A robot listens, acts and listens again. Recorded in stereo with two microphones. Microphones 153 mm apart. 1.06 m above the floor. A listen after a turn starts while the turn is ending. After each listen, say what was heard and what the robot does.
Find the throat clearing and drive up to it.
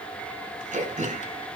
The throat clearing: about 55° right or 125° right. Turn 55° right.
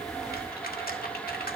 Keep listening.
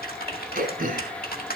So it is at 70° right. Turn 70° right.
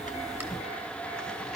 Keep listening.
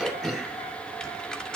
Drive 1.0 m forward.
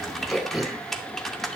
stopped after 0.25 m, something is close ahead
Blocked. The throat clearing is further on, straight ahead.